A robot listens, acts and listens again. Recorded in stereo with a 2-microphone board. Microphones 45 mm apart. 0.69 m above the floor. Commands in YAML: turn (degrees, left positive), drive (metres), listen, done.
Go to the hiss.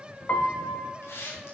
turn: 90
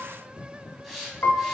drive: 1.0
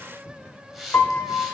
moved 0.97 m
drive: 1.0
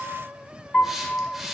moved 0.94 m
turn: -10
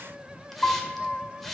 drive: 1.0
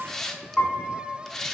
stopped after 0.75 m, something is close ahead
turn: 10
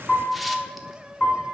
listen: true
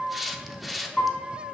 done: "I am next to the hiss."